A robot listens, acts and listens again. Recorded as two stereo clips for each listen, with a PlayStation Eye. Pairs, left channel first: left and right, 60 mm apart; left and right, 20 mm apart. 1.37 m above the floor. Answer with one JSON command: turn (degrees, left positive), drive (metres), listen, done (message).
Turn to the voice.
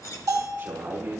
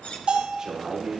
{"turn": -40}
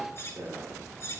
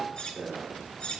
{"turn": -100}
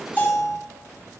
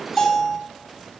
{"listen": true}
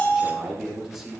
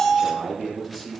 {"turn": -10}
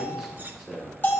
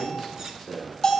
{"done": "Facing the man speaking, over 4 m away."}